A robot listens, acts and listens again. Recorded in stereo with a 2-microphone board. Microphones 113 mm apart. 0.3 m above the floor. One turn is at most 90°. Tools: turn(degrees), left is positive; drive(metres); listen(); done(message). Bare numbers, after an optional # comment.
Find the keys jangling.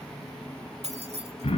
# The keys jangling: about 70° right or 110° right.
turn(-70)
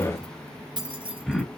# So it is at 50° right.
turn(-50)
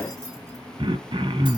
listen()
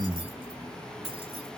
# The keys jangling is now 55° right.
turn(-55)
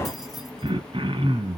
listen()
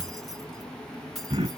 done("Facing the keys jangling, 2 to 4 m away.")